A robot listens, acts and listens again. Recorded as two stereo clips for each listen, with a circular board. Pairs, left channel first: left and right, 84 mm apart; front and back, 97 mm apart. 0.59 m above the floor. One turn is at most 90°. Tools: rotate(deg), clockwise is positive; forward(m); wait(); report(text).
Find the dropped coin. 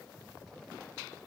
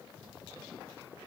wait()
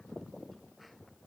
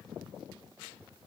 wait()
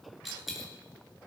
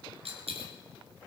rotate(-90)
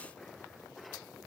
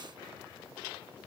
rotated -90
rotate(-90)
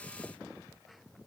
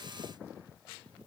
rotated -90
report("Facing where the dropped coin came from. I can't hear it now.")